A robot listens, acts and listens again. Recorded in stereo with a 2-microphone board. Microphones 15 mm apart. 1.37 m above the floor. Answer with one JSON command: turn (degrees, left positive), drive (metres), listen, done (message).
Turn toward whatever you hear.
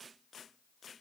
{"listen": true}
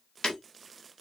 {"turn": 90}
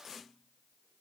{"done": "Facing where the breaking glass came from. I can't hear it now."}